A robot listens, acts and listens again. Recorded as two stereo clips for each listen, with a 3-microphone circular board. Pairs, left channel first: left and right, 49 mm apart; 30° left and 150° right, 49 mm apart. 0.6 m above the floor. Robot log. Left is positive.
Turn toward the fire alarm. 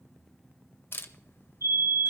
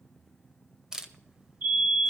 note: The fire alarm: 95° right.
cmd yaw -95
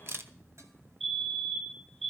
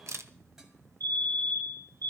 end: Found it: a fire alarm, straight ahead, over 4 m away.